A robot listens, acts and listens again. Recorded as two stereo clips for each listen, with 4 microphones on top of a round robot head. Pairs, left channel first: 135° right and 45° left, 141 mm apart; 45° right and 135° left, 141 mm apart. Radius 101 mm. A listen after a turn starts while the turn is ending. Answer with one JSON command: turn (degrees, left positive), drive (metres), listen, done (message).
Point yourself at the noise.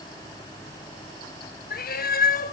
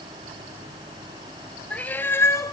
{"turn": -115}
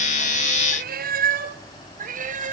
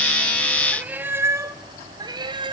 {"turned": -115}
{"turn": 75}
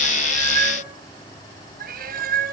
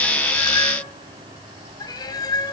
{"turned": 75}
{"turn": 20}
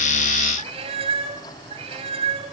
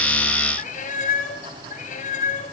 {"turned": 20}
{"turn": -10}
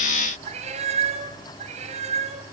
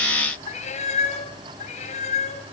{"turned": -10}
{"done": "Found it: a cat meowing, straight ahead, 2 to 4 m away."}